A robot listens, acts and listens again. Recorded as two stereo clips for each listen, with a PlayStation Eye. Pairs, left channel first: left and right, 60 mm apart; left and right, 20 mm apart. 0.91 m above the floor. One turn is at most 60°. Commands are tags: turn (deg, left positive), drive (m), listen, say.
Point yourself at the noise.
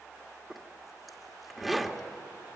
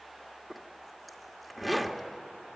<turn deg="30"/>
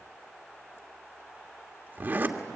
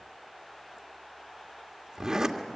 <turn deg="-35"/>
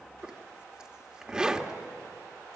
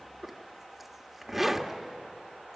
<turn deg="-15"/>
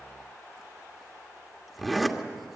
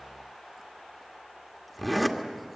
<say>Facing the zipper.</say>